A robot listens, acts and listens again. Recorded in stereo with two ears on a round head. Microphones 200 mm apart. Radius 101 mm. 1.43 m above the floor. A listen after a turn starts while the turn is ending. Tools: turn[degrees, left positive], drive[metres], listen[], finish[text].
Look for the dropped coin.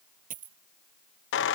Thought: The dropped coin: about 40° right or 140° right.
Action: turn[-40]
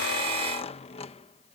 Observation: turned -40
Action: listen[]
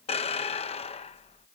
Action: finish[I heard a dropped coin, but can't make it out now. It was about straight ahead or 100° right.]